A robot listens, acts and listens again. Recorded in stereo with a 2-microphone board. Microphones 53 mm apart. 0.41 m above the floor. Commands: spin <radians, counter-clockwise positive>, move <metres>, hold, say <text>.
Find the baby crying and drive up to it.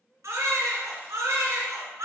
spin -1.57
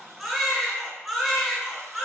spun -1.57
move 1.0
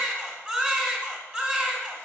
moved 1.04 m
spin -0.35
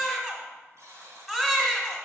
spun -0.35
spin -0.17
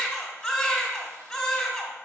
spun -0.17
move 1.0
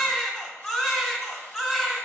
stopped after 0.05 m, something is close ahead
say Arrived at the baby crying, straight ahead.